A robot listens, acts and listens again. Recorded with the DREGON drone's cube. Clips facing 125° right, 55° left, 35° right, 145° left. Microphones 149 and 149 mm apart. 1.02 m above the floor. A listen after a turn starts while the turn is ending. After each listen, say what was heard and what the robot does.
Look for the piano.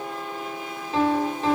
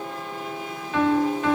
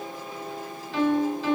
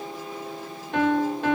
The piano: 175° left. Turn 175° left.
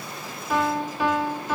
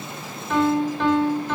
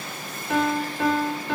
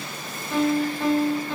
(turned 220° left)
The piano is now 45° right. Turn 45° right.
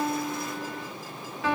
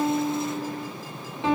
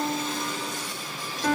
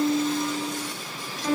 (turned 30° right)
The piano is now 10° right. Turn 10° right.
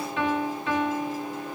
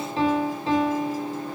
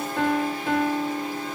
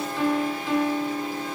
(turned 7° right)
Found it: a piano, straight ahead, over 4 m away.